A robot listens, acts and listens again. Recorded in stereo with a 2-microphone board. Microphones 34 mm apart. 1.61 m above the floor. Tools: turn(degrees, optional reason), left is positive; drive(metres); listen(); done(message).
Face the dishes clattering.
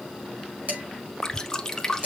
turn(degrees=-45, reason="The dishes clattering: about 45° right or 135° right.")
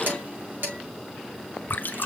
turn(degrees=-85, reason="So it is at 85° right.")
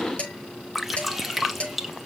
turn(degrees=30, reason="The dishes clattering is now 30° left.")
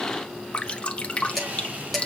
done("Found it: dishes clattering, straight ahead, over 4 m away.")